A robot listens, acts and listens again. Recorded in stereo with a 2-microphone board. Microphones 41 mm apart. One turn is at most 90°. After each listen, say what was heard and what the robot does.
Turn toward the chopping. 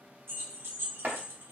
The chopping: about 55° right or 125° right. Turn 55° right.
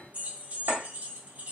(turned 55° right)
Keep listening.
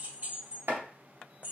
So it is at 70° right. Turn 70° right.
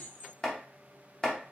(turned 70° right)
The chopping is now 15° left. Turn 15° left.
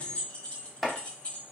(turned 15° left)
Facing the chopping.